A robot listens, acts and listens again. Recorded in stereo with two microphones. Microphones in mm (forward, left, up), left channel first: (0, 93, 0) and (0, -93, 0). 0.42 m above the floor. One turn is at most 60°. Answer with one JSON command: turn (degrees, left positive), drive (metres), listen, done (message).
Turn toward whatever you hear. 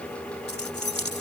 {"turn": 60}
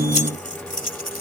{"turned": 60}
{"turn": 50}
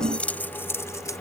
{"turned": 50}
{"turn": 15}
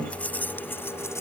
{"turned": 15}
{"turn": 10}
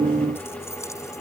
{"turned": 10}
{"listen": true}
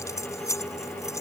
{"turn": 15}
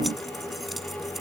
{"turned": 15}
{"listen": true}
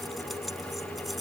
{"listen": true}
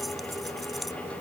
{"done": "I heard keys jangling from this way, but can't make it out now."}